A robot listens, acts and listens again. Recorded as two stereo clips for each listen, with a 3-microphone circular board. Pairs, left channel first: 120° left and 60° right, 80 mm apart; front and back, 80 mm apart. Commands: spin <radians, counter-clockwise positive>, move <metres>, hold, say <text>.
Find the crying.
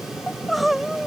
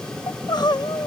spin 0.52
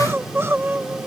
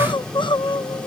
say Facing the crying.